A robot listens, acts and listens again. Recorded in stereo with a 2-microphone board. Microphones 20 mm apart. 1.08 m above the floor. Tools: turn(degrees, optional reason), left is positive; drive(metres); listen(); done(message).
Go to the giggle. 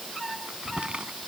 listen()
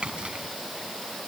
listen()
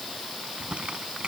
done("I can't make out a giggle to turn to.")